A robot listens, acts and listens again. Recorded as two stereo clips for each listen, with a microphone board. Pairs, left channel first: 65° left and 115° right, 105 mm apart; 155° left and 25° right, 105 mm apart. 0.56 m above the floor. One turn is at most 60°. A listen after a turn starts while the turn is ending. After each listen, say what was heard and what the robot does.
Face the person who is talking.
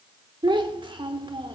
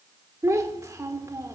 The child speaking: 80° right. Turn 60° right.
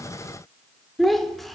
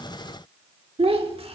The child speaking is now 20° right. Turn 20° right.
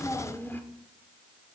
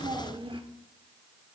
Found it: a child speaking, straight ahead.